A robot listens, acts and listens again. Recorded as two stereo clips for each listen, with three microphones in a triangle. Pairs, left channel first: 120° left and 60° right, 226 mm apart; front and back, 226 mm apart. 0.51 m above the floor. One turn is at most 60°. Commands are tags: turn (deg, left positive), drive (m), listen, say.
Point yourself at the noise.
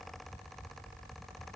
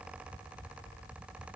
<listen/>
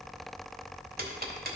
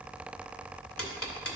<turn deg="-10"/>
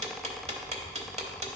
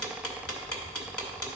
<say>Facing the ticking.</say>